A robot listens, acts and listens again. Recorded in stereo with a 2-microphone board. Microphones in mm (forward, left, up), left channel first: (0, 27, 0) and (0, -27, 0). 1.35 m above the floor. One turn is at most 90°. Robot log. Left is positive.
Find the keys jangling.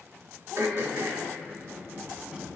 note: The keys jangling: about 20° right or 160° right.
cmd yaw -20
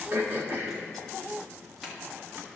end: Found it: keys jangling, straight ahead, 1 to 2 m away.